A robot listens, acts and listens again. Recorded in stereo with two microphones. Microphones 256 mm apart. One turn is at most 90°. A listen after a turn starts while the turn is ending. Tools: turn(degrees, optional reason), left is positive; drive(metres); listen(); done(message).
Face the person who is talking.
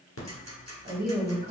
turn(degrees=-35, reason="The woman speaking: about 35° right or 145° right.")
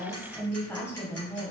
turn(degrees=15, reason="So it is at 15° left.")
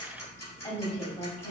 turn(degrees=30, reason="The woman speaking is now 30° left.")
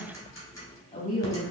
turn(degrees=30, reason="The woman speaking is now 30° left.")
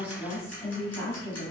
turn(degrees=15, reason="The woman speaking is now 15° left.")
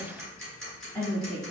done("Found it: a woman speaking, straight ahead.")